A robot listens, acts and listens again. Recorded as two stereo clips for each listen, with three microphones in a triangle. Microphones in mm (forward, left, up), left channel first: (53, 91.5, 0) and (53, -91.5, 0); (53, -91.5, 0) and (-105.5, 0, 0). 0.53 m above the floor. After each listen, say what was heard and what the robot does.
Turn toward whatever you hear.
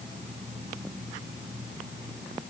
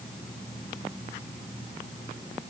Keep listening.
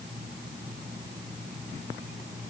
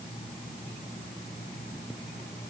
Keep listening.
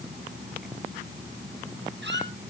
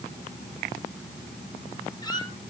The squeak: 95° right. Turn 95° right.
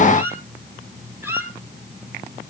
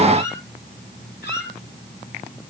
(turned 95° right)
The squeak is now 10° right. Turn 10° right.
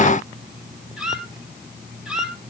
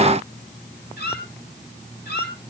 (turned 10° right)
Found it: a squeak, straight ahead, 2 to 4 m away.